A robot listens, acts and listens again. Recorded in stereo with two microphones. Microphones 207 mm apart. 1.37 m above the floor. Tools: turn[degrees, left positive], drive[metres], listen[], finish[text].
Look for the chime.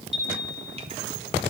Thought: The chime: about 65° right or 115° right.
Action: turn[-65]
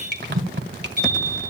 Thought: So it is at 45° right.
Action: turn[-45]
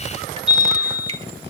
Action: finish[Facing the chime, over 4 m away.]